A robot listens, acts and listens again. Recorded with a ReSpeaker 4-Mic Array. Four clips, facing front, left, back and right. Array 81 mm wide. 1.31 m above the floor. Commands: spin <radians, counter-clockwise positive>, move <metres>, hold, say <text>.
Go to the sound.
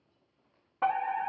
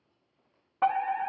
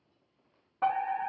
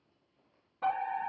spin 1.40
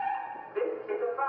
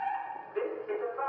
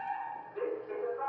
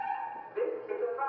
spin 0.44
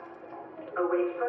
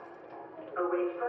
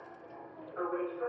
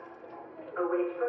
spin 0.17
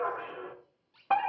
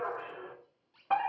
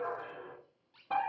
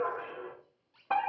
move 1.0
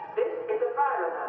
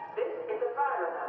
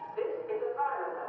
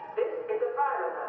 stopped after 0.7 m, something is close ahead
say I am next to the fire alarm.